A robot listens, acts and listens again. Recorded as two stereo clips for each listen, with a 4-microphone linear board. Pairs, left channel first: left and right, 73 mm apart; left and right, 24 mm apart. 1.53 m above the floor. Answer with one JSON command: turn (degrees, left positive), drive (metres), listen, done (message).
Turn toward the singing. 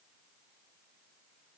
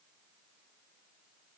{"listen": true}
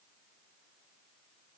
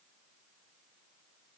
{"listen": true}
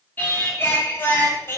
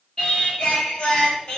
{"turn": 35}
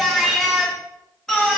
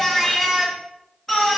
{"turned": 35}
{"turn": 10}
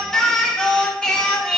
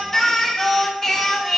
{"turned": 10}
{"turn": 15}
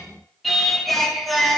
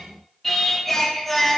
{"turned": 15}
{"done": "Found it: singing, straight ahead, 2 to 4 m away."}